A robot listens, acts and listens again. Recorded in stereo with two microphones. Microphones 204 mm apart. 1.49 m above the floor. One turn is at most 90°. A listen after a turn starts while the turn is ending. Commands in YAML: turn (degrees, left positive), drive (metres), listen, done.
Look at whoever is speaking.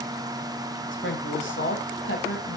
turn: 70
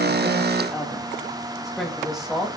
done: "Facing the woman speaking, 2 to 4 m away."